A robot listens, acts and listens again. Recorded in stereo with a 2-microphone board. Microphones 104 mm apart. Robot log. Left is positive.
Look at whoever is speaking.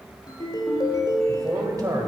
note: The man speaking: about 35° right or 145° right.
cmd yaw -35
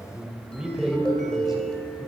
end: Found it: a man speaking, straight ahead.